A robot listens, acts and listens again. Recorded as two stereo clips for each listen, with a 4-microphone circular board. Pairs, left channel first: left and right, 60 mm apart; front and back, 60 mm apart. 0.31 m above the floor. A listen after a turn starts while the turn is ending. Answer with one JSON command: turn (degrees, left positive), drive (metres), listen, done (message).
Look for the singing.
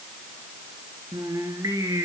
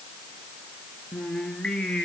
{"turn": -75}
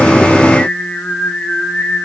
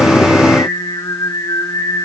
{"turn": 15}
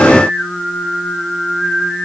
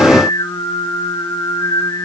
{"done": "Found it: singing, straight ahead, 2 to 4 m away."}